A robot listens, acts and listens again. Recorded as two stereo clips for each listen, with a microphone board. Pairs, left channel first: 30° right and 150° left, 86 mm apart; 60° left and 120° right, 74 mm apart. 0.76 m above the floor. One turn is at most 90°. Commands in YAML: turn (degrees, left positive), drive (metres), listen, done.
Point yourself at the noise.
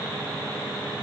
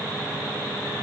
listen: true
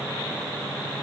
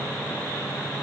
listen: true
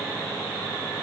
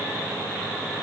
done: "I can't make out anything to turn to."